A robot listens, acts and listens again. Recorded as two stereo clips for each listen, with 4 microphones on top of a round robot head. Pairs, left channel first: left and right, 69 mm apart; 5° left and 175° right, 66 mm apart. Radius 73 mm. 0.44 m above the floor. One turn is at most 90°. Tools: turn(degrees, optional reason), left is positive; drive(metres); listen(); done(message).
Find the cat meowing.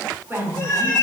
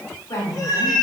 turn(degrees=30, reason="The cat meowing: 30° left.")
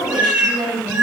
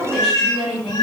turn(degrees=-25, reason="The cat meowing is now 25° right.")
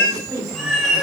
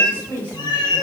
turn(degrees=-10, reason="The cat meowing is now 10° right.")
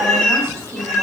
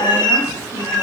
done("Found it: a cat meowing, straight ahead.")